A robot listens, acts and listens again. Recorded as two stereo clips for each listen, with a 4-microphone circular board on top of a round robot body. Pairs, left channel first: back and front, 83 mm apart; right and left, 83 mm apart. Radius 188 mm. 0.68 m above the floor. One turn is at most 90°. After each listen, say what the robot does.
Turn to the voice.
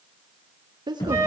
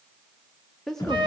Facing the woman speaking.